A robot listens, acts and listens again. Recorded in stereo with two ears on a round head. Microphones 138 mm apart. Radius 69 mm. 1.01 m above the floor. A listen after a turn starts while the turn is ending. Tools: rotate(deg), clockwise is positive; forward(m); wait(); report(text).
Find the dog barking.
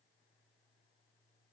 wait()
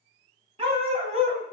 rotate(50)
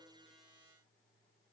wait()
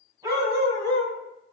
rotate(25)
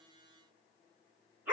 rotate(15)
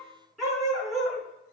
report("Found it: a dog barking, straight ahead, 2 to 4 m away.")